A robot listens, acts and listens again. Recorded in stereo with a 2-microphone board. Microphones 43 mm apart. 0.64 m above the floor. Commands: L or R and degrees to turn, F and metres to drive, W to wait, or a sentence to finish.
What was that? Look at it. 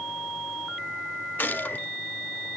L40
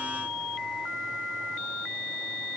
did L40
W
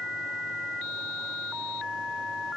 I heard a gunshot, but can't make it out now. It was about straight ahead or 100° left.